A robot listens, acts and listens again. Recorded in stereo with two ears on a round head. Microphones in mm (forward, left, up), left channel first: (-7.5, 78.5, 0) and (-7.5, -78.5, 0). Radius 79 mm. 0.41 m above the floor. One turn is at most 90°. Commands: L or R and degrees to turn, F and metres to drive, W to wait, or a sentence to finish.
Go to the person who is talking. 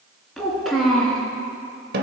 L30
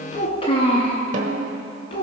L90
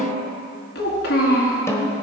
L70
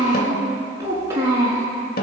R15
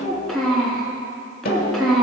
F1.0
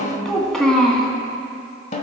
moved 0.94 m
F1.0
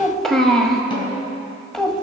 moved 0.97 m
F1.0
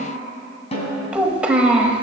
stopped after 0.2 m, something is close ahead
R10
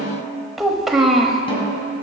I am next to the child speaking.